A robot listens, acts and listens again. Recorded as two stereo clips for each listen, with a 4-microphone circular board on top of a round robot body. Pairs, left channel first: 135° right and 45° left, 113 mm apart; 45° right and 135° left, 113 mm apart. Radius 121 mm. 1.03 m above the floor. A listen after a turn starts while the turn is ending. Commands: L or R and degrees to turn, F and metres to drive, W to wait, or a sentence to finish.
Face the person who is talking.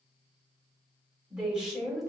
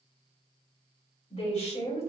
R45
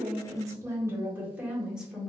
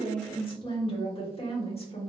R40
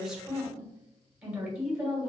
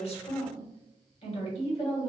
R40
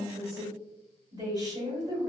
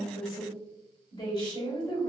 Facing the woman speaking.